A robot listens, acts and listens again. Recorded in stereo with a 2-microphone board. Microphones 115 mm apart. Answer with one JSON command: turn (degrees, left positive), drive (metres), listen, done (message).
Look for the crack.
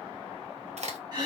{"turn": -75}
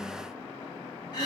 {"listen": true}
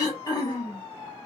{"done": "I heard a crack, but can't make it out now. It was about straight ahead or 30° right."}